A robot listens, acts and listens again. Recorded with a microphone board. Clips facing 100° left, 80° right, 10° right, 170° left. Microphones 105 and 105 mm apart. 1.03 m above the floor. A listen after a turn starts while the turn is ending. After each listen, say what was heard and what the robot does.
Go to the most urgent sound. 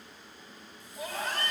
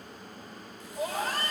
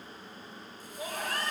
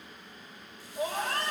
The scream: 125° right. Turn 125° right.
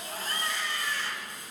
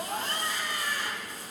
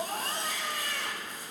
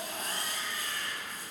Drive 1.0 m forward.
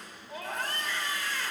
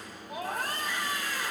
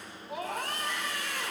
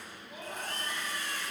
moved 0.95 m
Drive 1.0 m forward.
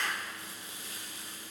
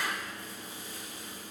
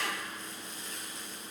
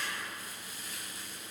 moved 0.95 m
Drive 1.0 m forward.
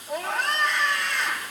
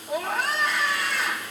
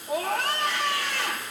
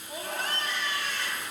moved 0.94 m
The scream is now 10° left. Turn 10° left.
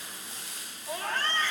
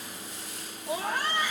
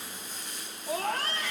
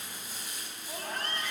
Drive 1.0 m forward.
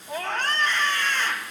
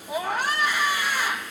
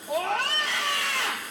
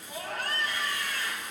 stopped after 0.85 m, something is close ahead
Arrived at the scream, straight ahead.